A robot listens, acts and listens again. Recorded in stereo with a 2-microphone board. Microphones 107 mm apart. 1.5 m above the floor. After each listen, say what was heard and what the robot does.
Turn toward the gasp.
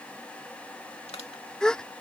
Turn 30° left.
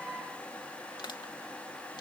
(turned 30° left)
Keep listening.
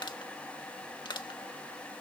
I heard a gasp, but can't make it out now. It was about 20° right or 140° left.